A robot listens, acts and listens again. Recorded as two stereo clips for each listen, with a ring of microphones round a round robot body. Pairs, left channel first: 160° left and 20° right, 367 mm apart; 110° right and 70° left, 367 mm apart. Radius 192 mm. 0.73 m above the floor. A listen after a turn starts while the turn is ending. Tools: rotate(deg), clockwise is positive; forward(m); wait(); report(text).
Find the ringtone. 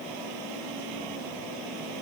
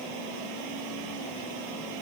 wait()
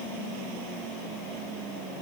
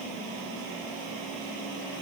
wait()
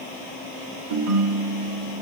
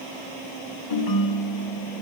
rotate(75)
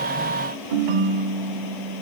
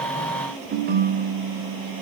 report("Found it: a ringtone, straight ahead, 1 to 2 m away.")